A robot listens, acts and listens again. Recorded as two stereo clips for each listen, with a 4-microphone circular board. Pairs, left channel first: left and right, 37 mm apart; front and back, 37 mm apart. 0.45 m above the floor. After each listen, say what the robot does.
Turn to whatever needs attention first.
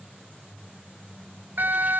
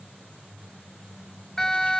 Turn 75° right.
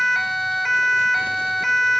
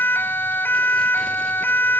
Found it: a siren, straight ahead.